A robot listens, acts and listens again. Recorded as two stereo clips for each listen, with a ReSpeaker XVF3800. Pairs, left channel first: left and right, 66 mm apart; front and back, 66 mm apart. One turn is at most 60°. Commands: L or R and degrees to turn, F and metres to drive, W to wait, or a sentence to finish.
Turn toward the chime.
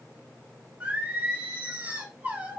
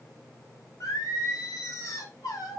W
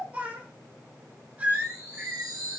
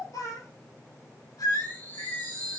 R60
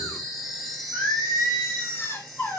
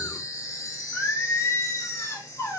Facing the chime, 2 to 4 m away.